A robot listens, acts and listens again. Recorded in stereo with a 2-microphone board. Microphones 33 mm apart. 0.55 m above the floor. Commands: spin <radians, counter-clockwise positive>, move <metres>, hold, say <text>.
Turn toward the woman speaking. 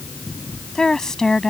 spin 0.35
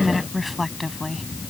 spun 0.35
say Facing the woman speaking.